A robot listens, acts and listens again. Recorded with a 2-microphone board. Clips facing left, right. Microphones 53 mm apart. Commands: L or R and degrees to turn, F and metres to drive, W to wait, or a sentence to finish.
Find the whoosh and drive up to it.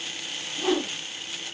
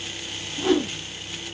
L30
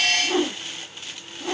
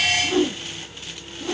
L150
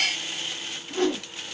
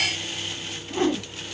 R30
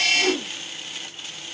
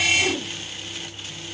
L10
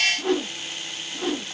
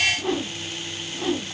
F1.0
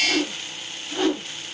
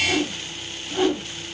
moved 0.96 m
F1.0
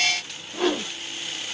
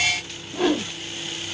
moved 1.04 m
F1.0
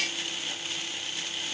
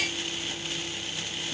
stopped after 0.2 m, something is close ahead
W
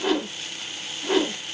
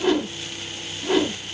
Arrived at the whoosh, straight ahead.